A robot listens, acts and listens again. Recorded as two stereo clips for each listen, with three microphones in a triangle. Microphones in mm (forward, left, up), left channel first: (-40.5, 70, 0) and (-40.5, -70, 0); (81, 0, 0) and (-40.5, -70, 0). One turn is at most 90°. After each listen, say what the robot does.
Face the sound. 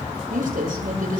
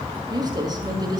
Turn 90° right.
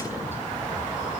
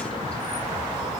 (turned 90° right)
Keep listening.
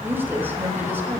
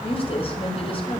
Turn 15° right.
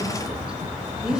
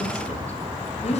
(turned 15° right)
Facing the woman speaking, over 4 m away.